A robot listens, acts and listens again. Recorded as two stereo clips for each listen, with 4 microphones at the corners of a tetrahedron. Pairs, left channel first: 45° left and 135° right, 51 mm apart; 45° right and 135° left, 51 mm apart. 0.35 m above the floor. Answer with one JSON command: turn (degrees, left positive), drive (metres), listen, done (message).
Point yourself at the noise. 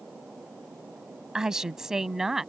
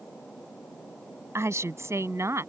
{"turn": 140}
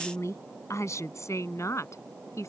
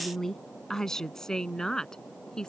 {"turn": 35}
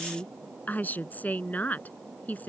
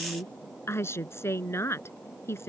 {"turn": -10}
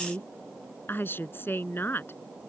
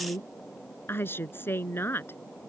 {"done": "Facing the woman speaking."}